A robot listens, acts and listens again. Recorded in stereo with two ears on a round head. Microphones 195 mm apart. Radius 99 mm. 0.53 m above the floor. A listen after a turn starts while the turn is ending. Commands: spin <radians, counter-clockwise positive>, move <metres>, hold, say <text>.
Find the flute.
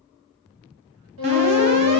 spin -1.05
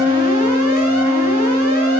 say Found it: a flute, straight ahead.